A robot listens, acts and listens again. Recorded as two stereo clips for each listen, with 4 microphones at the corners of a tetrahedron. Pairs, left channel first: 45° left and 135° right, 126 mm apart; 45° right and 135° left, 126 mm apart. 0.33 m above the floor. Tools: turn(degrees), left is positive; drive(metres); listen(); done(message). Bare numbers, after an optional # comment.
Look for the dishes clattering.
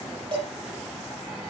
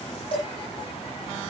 # The dishes clattering: 85° right.
turn(-85)
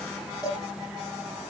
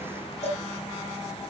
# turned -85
# The dishes clattering is now 10° right.
turn(-10)
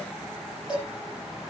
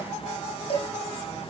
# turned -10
done("Facing the dishes clattering.")